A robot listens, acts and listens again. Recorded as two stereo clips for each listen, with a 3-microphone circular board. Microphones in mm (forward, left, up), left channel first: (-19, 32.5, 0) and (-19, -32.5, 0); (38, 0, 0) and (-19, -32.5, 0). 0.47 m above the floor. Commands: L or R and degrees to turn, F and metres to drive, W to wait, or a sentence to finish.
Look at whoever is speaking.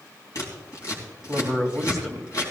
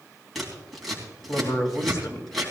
Facing the man speaking.